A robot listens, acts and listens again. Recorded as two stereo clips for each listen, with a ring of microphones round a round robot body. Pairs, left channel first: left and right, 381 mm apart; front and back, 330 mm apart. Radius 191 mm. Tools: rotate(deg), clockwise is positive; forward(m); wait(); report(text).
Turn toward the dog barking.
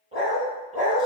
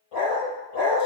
rotate(20)
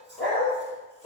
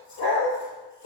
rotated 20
report("Found it: a dog barking, straight ahead, 2 to 4 m away.")